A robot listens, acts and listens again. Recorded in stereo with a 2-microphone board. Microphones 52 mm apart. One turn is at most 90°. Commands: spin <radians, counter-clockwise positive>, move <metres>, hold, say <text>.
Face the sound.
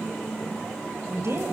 spin -0.96
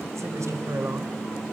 spin -1.13
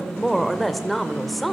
say Found it: a woman speaking, straight ahead.